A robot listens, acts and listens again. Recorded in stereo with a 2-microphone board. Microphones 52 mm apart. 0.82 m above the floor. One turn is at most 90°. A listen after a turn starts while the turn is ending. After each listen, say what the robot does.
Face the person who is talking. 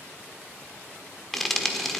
Keep listening.
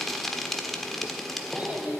Turn 30° right.
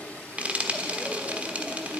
Keep listening.
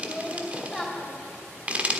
Found it: a child speaking, straight ahead, 2 to 4 m away.